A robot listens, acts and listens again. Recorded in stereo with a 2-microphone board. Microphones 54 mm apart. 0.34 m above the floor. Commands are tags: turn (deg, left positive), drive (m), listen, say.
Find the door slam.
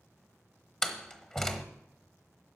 <turn deg="30"/>
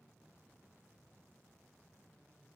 <listen/>
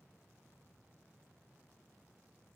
<say>I heard a door slam, but can't make it out now. It was about 20° right or 140° left.</say>